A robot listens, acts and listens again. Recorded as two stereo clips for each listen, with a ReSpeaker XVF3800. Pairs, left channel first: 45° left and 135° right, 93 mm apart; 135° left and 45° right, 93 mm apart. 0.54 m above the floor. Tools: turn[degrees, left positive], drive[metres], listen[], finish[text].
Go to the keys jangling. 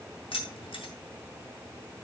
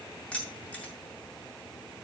Thought: The keys jangling: 55° left.
Action: turn[55]
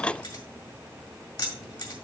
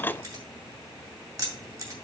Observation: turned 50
Action: drive[1.0]
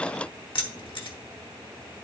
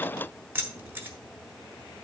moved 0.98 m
Thought: The keys jangling is now 20° left.
Action: turn[20]
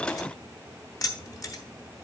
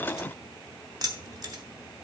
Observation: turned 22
Action: drive[1.0]
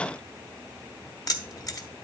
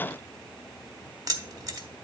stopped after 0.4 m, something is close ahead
Action: finish[I am next to the keys jangling.]